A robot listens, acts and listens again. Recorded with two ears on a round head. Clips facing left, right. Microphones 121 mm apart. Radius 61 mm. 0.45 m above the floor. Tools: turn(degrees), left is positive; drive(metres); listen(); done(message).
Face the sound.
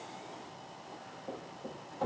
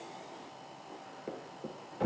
turn(degrees=-90)
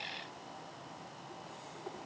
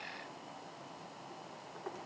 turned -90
done("I heard a thud from this way, but can't make it out now.")